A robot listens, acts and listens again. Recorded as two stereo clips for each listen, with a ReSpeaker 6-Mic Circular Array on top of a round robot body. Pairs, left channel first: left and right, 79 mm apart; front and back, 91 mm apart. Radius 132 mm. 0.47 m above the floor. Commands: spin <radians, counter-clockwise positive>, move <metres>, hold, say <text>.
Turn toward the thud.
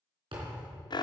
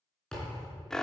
spin -1.40
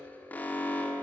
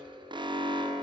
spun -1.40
say Facing where the thud came from. I can't hear it now.